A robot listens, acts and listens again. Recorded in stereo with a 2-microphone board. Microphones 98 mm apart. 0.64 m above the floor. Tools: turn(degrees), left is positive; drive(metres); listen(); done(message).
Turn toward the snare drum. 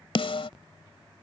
turn(degrees=70)
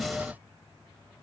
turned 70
done("Facing the snare drum.")